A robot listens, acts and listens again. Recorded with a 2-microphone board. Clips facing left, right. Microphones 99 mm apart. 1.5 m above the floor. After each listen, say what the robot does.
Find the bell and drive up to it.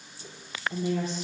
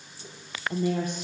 Keep listening.
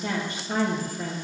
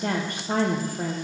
Keep listening.
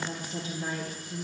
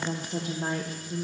I can't make out a bell, only a woman speaking.